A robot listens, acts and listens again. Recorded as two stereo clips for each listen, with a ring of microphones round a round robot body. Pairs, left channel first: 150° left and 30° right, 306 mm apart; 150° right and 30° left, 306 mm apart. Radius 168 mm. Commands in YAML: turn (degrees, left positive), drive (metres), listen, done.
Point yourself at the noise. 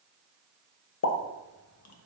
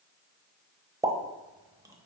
turn: 110
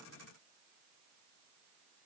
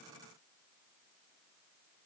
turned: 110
done: "I heard a pop from this way, but can't make it out now."